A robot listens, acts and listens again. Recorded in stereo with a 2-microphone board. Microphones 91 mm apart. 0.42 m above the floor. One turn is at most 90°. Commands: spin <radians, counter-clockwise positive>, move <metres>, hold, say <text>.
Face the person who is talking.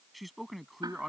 spin 0.52
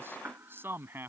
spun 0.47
spin -0.52
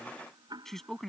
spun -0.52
say Found it: a man speaking, straight ahead.